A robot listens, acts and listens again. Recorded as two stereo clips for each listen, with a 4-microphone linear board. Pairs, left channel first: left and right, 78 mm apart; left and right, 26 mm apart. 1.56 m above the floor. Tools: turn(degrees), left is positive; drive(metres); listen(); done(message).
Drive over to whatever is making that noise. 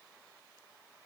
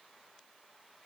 listen()
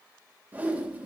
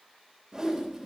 turn(degrees=-20)
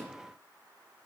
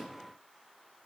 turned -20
listen()
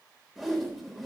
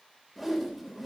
drive(metres=1.0)
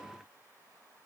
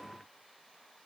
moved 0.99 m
listen()
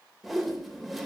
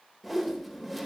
drive(metres=1.0)
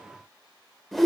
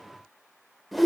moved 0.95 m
drive(metres=1.0)
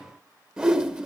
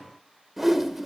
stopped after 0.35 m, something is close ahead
turn(degrees=-10)
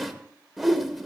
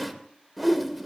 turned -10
done("I am next to the whoosh.")